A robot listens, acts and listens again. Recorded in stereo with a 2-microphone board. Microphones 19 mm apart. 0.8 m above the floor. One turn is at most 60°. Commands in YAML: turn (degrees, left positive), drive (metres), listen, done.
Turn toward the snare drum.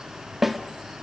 turn: -15
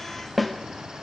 done: "Found it: a snare drum, straight ahead."